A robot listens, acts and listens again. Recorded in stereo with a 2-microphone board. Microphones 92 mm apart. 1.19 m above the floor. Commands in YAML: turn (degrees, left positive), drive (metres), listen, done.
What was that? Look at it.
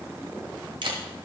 turn: -60
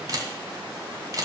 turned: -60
turn: -45
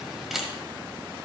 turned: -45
done: "Found it: a camera shutter, straight ahead, 1 to 2 m away."